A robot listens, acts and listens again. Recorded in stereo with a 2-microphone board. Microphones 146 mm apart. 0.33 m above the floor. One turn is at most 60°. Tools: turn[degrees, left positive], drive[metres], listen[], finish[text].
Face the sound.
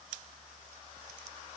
Action: listen[]
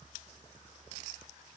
Action: listen[]
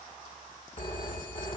Thought: The phone ringing: about 35° left or 145° left.
Action: turn[35]
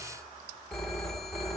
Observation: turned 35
Action: finish[Facing the phone ringing, 1 to 2 m away.]